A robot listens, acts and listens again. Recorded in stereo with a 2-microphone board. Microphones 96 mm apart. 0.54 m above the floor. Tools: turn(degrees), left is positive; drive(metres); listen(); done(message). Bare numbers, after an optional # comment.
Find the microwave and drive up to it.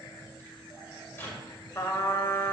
# The microwave: about 25° left or 155° left.
turn(25)
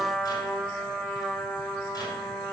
listen()
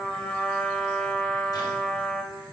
listen()
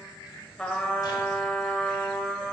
done("I heard a microwave, but can't make it out now. It was about straight ahead or 130° left. I did not reach it.")